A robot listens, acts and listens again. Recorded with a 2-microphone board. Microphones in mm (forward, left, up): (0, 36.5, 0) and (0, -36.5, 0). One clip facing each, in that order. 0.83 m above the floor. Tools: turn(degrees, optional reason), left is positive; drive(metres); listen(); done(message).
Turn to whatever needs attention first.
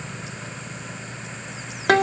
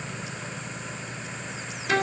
listen()
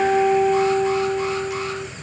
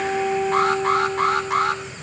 turn(degrees=-60, reason="The alarm: about 60° right or 120° right.")
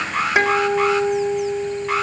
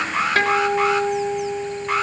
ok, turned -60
done("Found it: an alarm, straight ahead.")